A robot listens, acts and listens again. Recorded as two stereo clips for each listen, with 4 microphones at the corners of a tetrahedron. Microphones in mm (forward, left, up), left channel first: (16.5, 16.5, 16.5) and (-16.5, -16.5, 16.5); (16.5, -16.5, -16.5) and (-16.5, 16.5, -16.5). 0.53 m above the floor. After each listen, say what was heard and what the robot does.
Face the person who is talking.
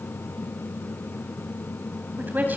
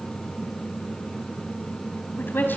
The woman speaking: 85° right. Turn 85° right.
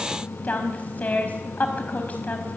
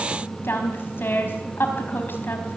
The woman speaking is now 10° right. Turn 10° right.
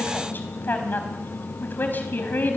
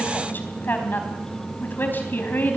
Facing the woman speaking.